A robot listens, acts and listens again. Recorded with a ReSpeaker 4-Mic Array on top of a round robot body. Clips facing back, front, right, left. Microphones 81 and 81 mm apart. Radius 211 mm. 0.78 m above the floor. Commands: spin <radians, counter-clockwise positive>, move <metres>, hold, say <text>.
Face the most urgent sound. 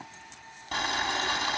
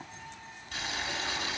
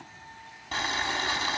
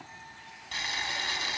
hold
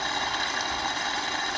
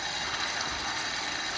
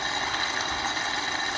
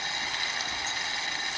hold
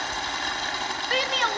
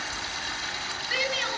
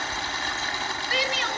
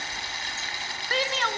spin 2.53
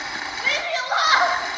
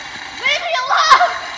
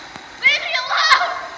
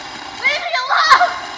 spin 0.44
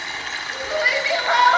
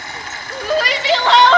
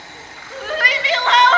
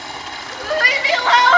say Found it: a shout, straight ahead, 2 to 4 m away.